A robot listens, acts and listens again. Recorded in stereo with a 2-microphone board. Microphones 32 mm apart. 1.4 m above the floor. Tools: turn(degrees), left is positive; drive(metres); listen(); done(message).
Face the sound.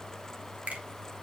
turn(degrees=-50)
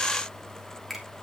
done("Facing the finger snap.")